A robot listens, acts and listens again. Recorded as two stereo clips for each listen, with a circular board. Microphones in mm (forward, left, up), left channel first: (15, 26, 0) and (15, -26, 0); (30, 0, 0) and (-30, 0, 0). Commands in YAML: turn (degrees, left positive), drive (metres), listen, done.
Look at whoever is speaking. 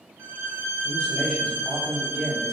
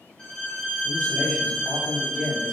turn: -165
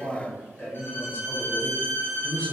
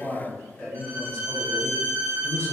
turn: 50
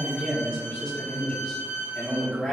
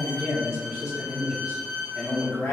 turn: 15
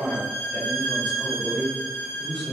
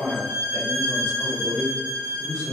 done: "Found it: a man speaking, straight ahead, 1 to 2 m away."